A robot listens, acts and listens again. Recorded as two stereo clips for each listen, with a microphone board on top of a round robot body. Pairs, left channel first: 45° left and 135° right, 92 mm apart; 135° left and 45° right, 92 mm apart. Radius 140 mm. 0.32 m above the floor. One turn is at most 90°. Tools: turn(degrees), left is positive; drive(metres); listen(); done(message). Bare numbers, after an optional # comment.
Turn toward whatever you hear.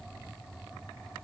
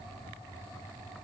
listen()
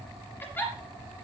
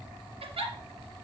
# The giggle: 25° right.
turn(-25)
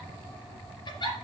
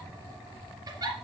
done("Facing the giggle.")